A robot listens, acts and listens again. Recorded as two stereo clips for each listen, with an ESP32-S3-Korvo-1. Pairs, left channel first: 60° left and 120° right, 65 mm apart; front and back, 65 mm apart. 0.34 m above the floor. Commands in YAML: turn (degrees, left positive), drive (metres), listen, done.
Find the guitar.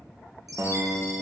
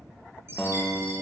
turn: -85
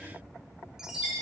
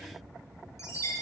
listen: true
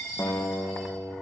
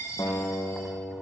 done: "Facing the guitar, 2 to 4 m away."